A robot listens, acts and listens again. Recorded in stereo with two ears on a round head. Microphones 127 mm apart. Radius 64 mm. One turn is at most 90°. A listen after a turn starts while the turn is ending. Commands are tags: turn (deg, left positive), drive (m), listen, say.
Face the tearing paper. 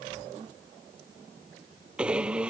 <listen/>
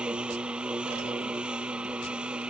<listen/>
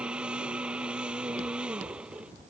<say>I can't make out tearing paper, only a blender.</say>